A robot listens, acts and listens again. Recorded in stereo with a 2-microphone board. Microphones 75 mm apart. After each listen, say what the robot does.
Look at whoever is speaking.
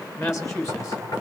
Turn 40° left.
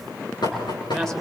Found it: a woman speaking, straight ahead.